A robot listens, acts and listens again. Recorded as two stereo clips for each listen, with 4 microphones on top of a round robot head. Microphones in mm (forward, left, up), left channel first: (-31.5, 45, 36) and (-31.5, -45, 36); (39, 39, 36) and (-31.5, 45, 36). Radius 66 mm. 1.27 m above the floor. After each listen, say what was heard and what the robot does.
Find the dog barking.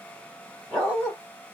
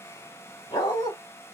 Found it: a dog barking, straight ahead, 1 to 2 m away.